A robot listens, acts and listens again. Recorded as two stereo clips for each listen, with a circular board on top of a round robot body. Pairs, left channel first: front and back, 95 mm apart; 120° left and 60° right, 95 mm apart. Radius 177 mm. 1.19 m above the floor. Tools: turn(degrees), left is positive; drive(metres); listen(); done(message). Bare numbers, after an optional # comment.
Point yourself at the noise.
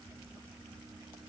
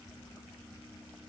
listen()
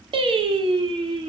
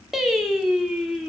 # The singing: 145° right.
turn(-145)
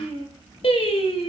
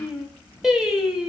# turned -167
# The singing is now 25° left.
turn(25)
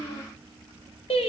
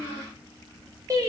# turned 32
done("Found it: singing, straight ahead.")